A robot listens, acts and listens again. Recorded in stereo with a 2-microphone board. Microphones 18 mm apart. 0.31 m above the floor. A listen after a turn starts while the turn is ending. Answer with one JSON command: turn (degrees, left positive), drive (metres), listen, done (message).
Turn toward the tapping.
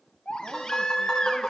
{"turn": 45}
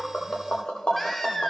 {"turn": 85}
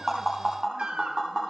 {"turn": -25}
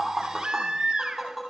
{"done": "Facing the tapping."}